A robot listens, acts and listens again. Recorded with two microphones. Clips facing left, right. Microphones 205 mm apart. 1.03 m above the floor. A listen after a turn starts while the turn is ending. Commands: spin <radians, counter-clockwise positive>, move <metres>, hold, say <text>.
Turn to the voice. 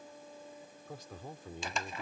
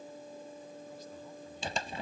spin 1.57
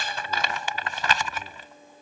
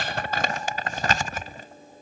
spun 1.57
hold
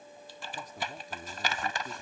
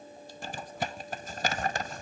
hold
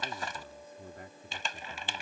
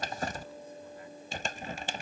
spin 1.13
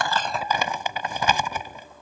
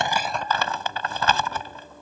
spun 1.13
hold
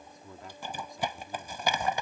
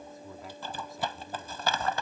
say Found it: a man speaking, straight ahead.